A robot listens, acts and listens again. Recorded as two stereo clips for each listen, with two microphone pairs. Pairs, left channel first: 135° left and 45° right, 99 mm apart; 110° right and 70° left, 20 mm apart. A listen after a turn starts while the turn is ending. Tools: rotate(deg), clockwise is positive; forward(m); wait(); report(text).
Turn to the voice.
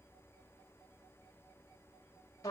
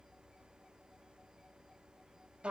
wait()
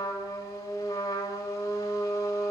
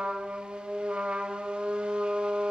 wait()
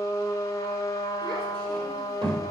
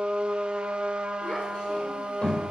rotate(85)
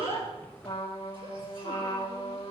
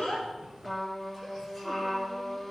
wait()
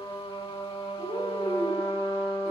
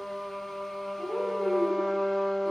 report("Found it: a child speaking, straight ahead, over 4 m away.")